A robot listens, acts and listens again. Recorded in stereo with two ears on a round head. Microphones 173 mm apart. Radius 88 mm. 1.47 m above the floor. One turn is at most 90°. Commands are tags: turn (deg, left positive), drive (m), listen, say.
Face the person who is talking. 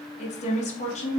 <turn deg="35"/>
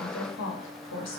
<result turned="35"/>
<turn deg="90"/>
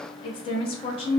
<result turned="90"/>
<turn deg="25"/>
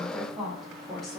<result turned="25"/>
<say>Found it: a woman speaking, straight ahead, under 1 m away.</say>